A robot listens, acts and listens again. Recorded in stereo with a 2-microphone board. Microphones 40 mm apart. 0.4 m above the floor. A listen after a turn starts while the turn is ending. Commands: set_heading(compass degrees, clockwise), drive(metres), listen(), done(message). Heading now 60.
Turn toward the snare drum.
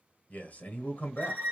listen()
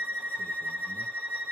listen()
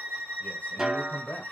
set_heading(90)
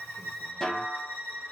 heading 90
set_heading(75)
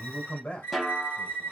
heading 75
done("Found it: a snare drum, straight ahead.")